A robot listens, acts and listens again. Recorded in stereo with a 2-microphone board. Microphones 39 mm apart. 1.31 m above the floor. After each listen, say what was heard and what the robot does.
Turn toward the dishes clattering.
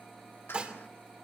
The dishes clattering: about 30° right or 150° right. Turn 30° right.
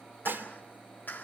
So it is at 120° right. Turn 120° right.
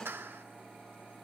Keep listening.
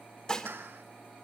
The dishes clattering is now 20° left. Turn 20° left.
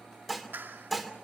Found it: dishes clattering, straight ahead, 2 to 4 m away.